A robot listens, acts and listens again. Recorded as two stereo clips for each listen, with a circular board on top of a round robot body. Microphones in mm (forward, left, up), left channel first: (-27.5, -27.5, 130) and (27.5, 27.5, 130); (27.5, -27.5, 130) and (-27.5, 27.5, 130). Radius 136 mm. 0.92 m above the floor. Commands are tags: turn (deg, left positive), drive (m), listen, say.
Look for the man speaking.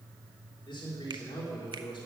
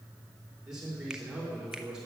<turn deg="-145"/>
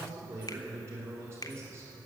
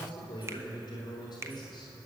<turn deg="-10"/>
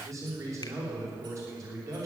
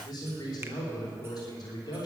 <say>Facing the man speaking.</say>